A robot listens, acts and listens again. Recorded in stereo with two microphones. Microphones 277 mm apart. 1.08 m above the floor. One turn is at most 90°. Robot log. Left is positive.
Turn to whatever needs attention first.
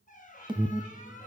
note: The alarm: about 15° right or 165° right.
cmd yaw -15
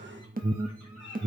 note: So it is at 150° right.
cmd yaw -90
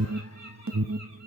note: The alarm is now 85° right.
cmd yaw -85
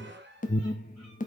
note: The alarm is now 30° left.
cmd yaw +30
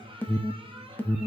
end: Found it: an alarm, straight ahead, under 1 m away.